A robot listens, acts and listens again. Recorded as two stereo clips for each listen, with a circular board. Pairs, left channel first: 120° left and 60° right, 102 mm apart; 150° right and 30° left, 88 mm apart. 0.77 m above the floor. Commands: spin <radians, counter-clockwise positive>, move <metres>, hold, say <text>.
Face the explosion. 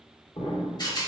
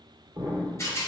spin 1.57
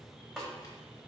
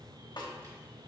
say Facing where the explosion came from. I can't hear it now.